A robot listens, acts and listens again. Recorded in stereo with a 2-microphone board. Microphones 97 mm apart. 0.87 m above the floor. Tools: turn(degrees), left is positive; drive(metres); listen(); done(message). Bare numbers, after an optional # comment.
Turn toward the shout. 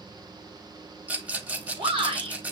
# The shout: about 65° right or 115° right.
turn(-65)
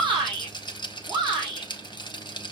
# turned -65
# So it is at 45° right.
turn(-45)
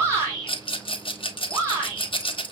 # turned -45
# The shout is now 30° right.
turn(-30)
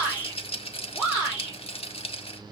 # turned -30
# The shout is now 15° right.
turn(-15)
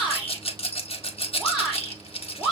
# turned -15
done("Facing the shout.")